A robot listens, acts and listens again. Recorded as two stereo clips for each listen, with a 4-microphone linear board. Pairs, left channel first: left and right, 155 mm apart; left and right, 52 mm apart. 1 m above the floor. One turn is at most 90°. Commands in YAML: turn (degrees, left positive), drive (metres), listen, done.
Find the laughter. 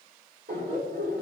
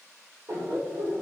turn: -70
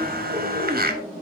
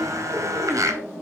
done: "Facing the laughter, 2 to 4 m away."